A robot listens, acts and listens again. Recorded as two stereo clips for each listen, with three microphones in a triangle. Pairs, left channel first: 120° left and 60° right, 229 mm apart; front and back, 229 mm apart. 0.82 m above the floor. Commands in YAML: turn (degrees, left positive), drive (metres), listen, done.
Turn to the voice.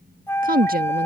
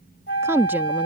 turn: -105
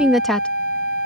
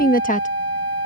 turn: 35
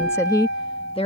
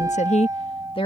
turn: 65
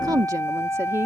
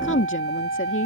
turn: 15
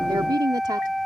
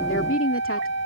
turn: 10
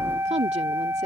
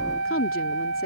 done: "Facing the woman speaking."